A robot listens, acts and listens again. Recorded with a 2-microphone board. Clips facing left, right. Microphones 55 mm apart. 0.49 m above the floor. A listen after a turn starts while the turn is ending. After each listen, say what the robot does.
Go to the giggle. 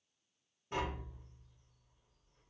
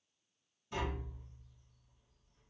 Keep listening.
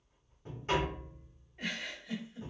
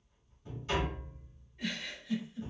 Turn 55° left.
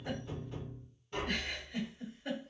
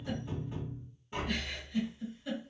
Turn 60° left.
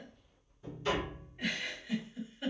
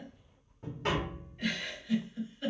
Turn 10° left.
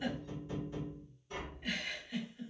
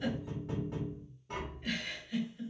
Drive 1.0 m forward.
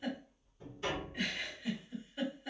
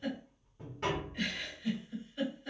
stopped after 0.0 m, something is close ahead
Turn 10° left.
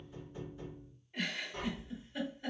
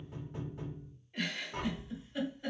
Blocked. The giggle is further on, straight ahead.